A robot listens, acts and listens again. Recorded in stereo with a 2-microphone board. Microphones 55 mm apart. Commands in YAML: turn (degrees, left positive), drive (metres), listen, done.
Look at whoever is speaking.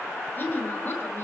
turn: 35
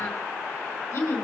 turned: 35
turn: 100
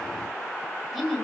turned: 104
done: "Found it: a woman speaking, straight ahead."